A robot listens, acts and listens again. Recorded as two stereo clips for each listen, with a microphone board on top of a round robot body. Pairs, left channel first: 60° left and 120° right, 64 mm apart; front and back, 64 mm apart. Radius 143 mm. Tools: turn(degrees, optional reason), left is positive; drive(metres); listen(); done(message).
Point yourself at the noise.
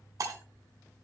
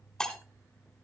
turn(degrees=-80, reason="The breaking glass: 80° right.")
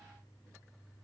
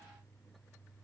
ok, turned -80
done("Facing where the breaking glass came from. I can't hear it now.")